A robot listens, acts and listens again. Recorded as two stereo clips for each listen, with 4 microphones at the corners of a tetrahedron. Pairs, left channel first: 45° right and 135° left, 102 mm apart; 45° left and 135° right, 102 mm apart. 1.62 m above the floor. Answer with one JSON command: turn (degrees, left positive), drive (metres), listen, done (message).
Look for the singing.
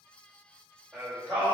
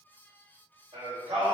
{"turn": -145}
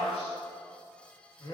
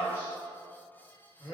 {"done": "Found it: singing, straight ahead."}